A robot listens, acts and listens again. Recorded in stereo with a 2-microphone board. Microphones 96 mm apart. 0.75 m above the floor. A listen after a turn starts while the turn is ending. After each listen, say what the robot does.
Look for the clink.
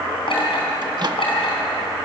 Turn 65° left.
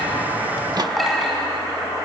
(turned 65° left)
Facing the clink.